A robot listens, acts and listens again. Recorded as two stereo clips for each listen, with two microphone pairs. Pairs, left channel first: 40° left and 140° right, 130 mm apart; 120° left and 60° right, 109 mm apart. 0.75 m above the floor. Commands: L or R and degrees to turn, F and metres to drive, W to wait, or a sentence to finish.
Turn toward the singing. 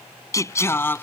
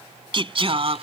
R30
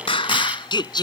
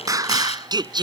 R15
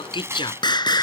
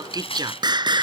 R15
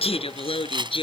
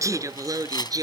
Found it: singing, straight ahead.